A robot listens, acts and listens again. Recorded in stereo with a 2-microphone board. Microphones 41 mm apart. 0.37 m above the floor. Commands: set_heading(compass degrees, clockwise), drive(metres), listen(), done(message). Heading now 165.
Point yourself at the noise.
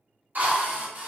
set_heading(210)
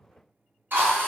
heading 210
set_heading(290)
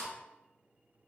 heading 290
listen()
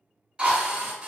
set_heading(320)
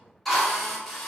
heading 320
done("Found it: a drill, straight ahead, 1 to 2 m away.")